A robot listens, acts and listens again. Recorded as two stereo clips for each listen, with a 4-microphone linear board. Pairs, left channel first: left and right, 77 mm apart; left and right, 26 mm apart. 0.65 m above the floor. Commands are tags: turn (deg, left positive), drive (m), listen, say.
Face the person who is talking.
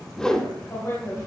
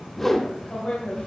<turn deg="40"/>
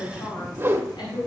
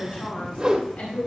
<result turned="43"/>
<turn deg="95"/>
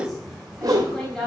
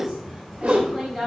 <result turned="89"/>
<say>Found it: a woman speaking, straight ahead.</say>